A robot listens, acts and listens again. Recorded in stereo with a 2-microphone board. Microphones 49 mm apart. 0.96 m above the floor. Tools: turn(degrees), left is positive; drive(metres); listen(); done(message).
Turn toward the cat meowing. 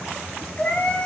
turn(degrees=20)
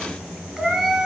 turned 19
turn(degrees=-10)
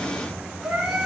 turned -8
turn(degrees=-10)
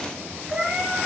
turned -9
turn(degrees=-10)
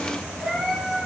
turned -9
done("Found it: a cat meowing, straight ahead.")